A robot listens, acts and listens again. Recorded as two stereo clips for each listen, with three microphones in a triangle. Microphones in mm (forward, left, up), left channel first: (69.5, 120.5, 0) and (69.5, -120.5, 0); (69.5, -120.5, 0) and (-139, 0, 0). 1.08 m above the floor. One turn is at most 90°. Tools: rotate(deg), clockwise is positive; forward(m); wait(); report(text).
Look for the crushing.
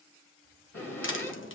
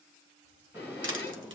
rotate(-90)
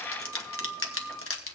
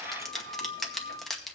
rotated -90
rotate(-60)
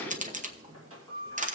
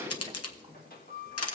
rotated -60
rotate(30)
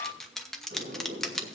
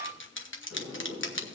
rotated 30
report("Facing the crushing, under 1 m away.")